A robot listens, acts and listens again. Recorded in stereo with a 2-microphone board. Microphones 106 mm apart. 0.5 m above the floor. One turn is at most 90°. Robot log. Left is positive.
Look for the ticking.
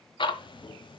note: The ticking: about 50° left or 130° left.
cmd yaw +50
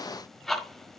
end: Facing the ticking, 1 to 2 m away.